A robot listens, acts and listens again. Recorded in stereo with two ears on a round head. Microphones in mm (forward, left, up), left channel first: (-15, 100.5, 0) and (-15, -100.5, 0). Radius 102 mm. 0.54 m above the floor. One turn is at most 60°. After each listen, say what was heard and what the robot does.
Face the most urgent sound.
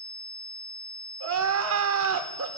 The crying: about 70° right or 110° right. Turn 60° right.
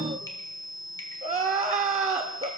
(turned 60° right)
So it is at 30° right. Turn 30° right.
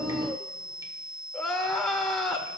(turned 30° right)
Found it: crying, straight ahead.